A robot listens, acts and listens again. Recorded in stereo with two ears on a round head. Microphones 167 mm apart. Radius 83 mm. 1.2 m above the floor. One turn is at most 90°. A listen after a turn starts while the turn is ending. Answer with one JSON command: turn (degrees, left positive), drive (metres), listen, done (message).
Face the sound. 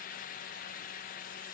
{"listen": true}
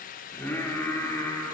{"turn": 15}
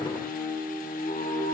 {"turn": 35}
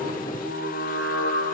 {"turn": 90}
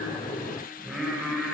{"done": "Facing the singing, over 4 m away."}